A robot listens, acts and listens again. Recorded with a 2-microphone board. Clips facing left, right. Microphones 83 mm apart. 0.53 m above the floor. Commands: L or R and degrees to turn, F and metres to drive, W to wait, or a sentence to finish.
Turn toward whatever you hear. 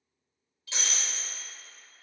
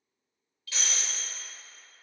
L20
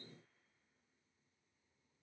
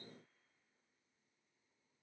W
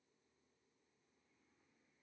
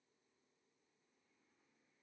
I heard breaking glass, but can't make it out now. It was about straight ahead or 140° left.